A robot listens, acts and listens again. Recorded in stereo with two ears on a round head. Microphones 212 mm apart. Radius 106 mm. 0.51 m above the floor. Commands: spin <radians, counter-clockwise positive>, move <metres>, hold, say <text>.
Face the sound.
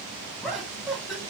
spin 0.52
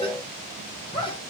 spin 2.71
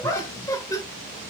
spin 0.26
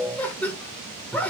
say Facing the laughter.